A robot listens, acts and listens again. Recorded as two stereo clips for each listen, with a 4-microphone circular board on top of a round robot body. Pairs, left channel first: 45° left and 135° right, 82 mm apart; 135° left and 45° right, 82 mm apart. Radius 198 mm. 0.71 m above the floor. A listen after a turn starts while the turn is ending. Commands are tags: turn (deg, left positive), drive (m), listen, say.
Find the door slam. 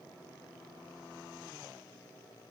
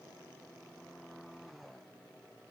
<listen/>
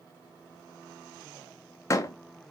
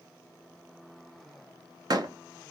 <say>Facing the door slam, under 1 m away.</say>